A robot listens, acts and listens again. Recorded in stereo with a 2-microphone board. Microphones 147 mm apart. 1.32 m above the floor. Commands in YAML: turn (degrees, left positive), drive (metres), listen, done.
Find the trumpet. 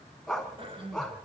listen: true
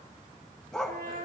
turn: -70
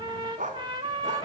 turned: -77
turn: -30
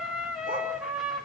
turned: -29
done: "Facing the trumpet, 2 to 4 m away."